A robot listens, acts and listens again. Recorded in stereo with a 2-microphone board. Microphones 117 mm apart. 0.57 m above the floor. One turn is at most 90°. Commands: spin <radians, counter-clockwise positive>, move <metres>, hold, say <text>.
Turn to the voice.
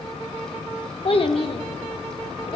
spin 0.87
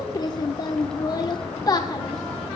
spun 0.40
spin 0.70
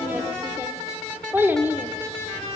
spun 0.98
spin -0.35
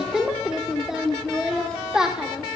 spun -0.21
say Facing the child speaking.